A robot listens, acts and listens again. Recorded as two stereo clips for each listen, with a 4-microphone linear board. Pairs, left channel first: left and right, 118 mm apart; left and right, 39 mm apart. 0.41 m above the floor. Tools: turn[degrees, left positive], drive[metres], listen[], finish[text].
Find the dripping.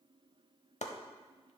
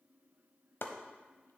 Action: listen[]
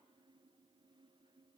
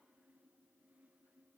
Action: listen[]
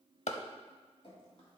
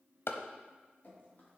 Thought: The dripping: about 50° left or 130° left.
Action: turn[50]
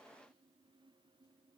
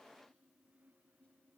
Action: listen[]
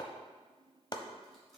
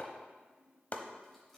Action: listen[]
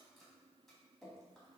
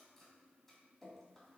Action: finish[Facing the dripping.]